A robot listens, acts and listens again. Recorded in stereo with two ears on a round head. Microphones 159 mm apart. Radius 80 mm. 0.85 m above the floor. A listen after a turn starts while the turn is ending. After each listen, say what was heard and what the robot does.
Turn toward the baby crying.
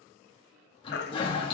The baby crying: about 65° left or 115° left. Turn 65° left.
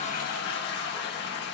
Keep listening.
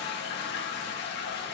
Keep listening.
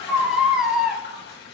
Facing the baby crying, under 1 m away.